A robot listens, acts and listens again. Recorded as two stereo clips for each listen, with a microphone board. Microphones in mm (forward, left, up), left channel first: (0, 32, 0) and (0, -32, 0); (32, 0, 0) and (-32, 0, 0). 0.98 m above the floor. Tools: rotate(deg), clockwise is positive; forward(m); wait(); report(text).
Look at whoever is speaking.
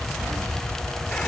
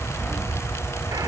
wait()
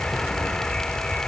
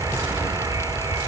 wait()
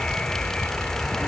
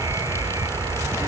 report("I can't make out anyone speaking to turn to.")